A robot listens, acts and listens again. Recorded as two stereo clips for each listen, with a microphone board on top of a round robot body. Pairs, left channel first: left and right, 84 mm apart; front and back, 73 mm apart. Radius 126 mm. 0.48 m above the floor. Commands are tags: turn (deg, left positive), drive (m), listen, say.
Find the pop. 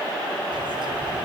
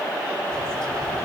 <listen/>
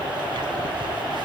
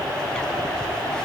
<listen/>
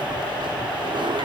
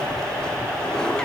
<say>I can't make out a pop, only a bird.</say>